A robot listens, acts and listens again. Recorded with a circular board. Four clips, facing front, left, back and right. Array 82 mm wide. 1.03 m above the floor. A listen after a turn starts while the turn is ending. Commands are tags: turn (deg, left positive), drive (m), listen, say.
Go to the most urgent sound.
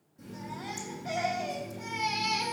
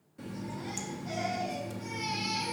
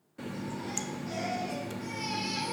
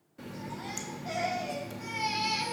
<turn deg="-30"/>
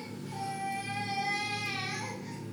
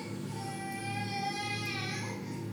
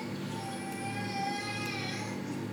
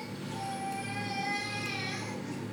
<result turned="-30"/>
<drive m="1.0"/>
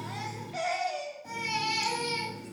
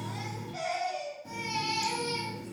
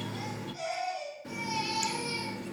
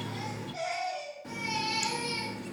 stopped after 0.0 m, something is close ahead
<say>Something is in my way. I am facing the baby crying but have not reached it.</say>